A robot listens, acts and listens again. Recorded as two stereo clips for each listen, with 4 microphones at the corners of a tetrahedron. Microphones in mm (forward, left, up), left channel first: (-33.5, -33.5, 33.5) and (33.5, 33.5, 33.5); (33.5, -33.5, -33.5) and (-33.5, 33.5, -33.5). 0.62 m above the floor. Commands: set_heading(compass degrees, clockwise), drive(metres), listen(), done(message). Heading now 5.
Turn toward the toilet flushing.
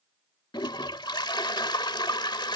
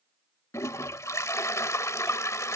set_heading(105)
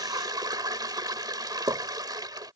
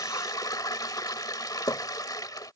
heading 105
done("Facing the toilet flushing.")